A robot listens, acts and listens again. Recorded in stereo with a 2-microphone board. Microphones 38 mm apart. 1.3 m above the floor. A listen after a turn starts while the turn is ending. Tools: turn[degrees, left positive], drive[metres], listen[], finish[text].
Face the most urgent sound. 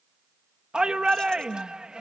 Thought: The shout: about 25° right or 155° right.
Action: turn[-25]
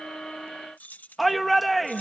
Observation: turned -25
Action: finish[Found it: a shout, straight ahead.]